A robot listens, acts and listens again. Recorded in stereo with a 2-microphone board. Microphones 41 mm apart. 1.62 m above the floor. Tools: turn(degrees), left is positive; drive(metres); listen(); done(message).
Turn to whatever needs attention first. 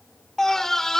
turn(degrees=30)
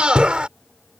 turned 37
turn(degrees=-25)
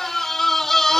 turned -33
turn(degrees=10)
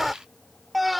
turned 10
done("Facing the scream.")